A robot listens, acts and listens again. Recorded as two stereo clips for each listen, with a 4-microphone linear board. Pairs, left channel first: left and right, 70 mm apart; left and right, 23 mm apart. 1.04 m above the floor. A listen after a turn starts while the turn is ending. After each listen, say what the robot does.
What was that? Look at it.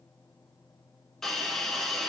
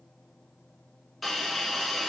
Turn 30° left.
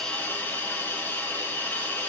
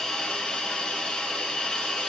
Turn 145° left.
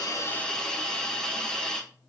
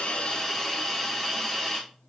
Turn 10° left.
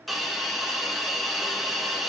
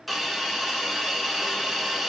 Facing the hiss, 1 to 2 m away.